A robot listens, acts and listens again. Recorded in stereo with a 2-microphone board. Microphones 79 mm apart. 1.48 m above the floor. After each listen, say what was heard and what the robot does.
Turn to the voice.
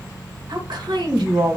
Turn 90° right.
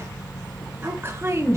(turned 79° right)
So it is at 40° right. Turn 40° right.
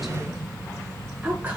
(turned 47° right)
The woman speaking is now 20° right. Turn 20° right.
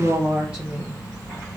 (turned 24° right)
The woman speaking is now 20° right. Turn 20° right.
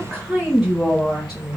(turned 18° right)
Found it: a woman speaking, straight ahead.